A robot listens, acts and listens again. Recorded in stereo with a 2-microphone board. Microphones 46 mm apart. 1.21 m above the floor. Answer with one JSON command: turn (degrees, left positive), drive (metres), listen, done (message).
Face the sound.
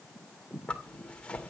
{"turn": 20}
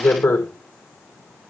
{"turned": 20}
{"turn": 135}
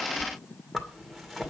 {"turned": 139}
{"done": "Found it: a zipper, straight ahead, 2 to 4 m away."}